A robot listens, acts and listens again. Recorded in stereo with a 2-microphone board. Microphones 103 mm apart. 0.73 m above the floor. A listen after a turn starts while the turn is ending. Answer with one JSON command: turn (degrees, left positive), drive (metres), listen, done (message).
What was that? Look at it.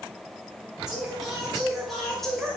{"turn": 30}
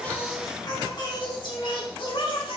{"turn": 120}
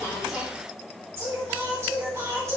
{"turn": -30}
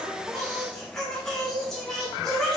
{"done": "Found it: singing, straight ahead, 2 to 4 m away."}